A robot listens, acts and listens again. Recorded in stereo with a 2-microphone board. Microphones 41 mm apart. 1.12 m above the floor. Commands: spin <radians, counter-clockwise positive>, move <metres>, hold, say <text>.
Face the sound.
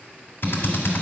spin 0.96
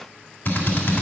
spin 1.22
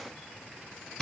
spin 0.17
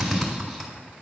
say Found it: a drill, straight ahead.